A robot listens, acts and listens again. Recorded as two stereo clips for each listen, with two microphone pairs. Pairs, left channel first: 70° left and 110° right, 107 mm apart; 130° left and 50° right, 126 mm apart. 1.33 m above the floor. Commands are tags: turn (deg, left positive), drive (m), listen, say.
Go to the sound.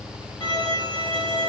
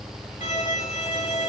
<turn deg="115"/>
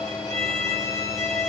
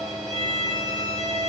<turn deg="10"/>
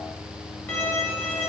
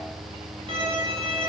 <drive m="1.0"/>
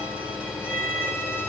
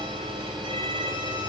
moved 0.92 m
<drive m="1.0"/>
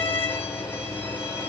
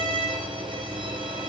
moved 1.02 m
<drive m="1.0"/>
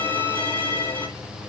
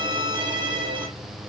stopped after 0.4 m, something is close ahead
<say>I am next to the violin.</say>